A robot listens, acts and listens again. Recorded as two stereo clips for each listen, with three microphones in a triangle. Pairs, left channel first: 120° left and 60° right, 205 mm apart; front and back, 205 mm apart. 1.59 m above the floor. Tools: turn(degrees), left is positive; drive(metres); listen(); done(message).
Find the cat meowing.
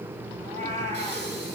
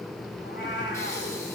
turn(degrees=-10)
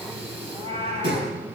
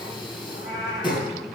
done("Found it: a cat meowing, straight ahead, 2 to 4 m away.")